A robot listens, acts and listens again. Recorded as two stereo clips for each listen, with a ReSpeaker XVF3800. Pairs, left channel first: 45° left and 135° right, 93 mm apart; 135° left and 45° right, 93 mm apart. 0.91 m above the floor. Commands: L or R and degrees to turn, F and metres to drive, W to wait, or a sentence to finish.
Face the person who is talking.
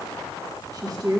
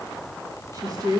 R85
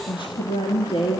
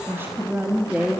L30
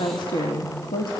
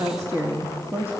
L25
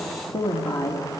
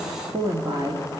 Facing the woman speaking, 2 to 4 m away.